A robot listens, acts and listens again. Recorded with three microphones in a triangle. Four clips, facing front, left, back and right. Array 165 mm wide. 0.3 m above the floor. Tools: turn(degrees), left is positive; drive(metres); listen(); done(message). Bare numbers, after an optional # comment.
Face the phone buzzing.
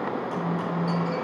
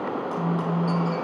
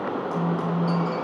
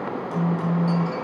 # The phone buzzing: 135° right.
turn(-135)
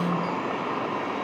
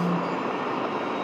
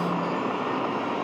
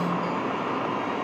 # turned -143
# Nothing new. It was at 10° left.
turn(10)
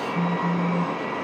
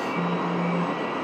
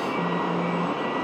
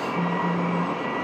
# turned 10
listen()
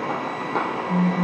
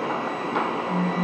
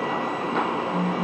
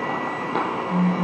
done("Found it: a phone buzzing, straight ahead.")